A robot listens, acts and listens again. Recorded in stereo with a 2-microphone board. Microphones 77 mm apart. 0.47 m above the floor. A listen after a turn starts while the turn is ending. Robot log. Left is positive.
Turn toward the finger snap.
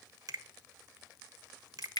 note: The finger snap: about 55° right or 125° right.
cmd yaw -55
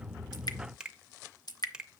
note: So it is at 15° right.
cmd yaw -15
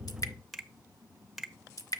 end: Facing the finger snap.